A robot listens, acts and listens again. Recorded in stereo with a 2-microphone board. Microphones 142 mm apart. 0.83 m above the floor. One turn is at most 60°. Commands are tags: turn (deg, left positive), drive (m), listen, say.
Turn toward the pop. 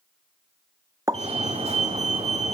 <turn deg="-25"/>
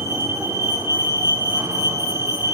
<listen/>
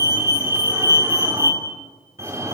<say>I heard a pop, but can't make it out now. It was about straight ahead or 130° right.</say>